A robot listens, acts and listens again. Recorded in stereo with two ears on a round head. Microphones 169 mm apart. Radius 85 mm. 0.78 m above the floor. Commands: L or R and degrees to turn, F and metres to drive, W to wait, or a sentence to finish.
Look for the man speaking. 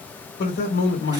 L65
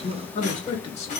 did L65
L35
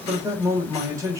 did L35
R20
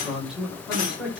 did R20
Found it: a man speaking, straight ahead.